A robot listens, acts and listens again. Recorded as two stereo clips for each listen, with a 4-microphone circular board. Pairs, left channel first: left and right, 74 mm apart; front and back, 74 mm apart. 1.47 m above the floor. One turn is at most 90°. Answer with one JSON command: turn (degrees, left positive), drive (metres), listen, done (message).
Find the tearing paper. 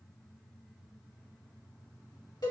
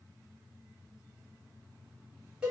{"listen": true}
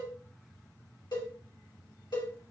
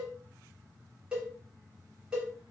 {"listen": true}
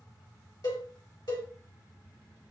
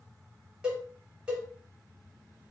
{"done": "I can't make out tearing paper to turn to."}